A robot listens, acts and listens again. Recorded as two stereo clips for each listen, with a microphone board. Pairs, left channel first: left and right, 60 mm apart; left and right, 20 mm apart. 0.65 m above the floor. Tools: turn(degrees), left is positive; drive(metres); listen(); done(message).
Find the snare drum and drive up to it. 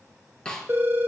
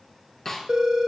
turn(degrees=30)
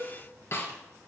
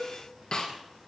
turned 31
turn(degrees=135)
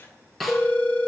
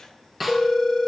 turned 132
drive(metres=1.0)
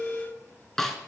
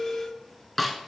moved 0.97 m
drive(metres=1.0)
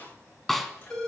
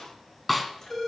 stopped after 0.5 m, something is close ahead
done("I am next to the snare drum.")